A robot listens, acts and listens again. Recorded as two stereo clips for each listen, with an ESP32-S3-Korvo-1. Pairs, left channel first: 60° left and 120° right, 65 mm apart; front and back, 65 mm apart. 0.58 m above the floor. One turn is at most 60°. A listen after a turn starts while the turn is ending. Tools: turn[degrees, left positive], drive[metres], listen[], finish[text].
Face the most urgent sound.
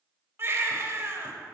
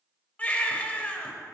Thought: The baby crying: 70° right.
Action: turn[-60]
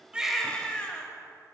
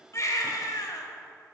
Thought: The baby crying is now 10° right.
Action: turn[-10]
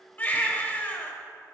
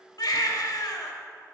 Action: finish[Facing the baby crying.]